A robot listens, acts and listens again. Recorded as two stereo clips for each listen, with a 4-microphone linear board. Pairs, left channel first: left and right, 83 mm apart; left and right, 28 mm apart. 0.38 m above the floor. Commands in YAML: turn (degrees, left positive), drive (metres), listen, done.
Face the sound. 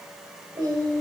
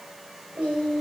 turn: -50
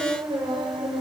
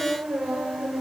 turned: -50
turn: -70
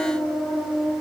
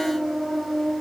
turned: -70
turn: 10
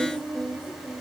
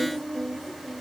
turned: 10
turn: 10
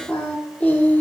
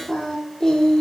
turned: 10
turn: 20
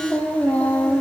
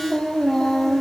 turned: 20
turn: 15
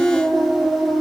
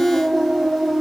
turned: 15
done: "Found it: singing, straight ahead, 1 to 2 m away."